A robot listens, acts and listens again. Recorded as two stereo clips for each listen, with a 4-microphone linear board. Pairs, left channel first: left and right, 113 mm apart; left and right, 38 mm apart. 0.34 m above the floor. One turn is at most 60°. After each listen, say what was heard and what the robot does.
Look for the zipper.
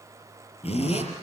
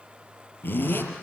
The zipper: about 75° left or 105° left. Turn 60° left.
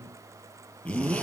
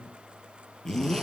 So it is at 15° left. Turn 15° left.
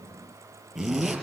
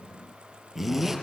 Facing the zipper, over 4 m away.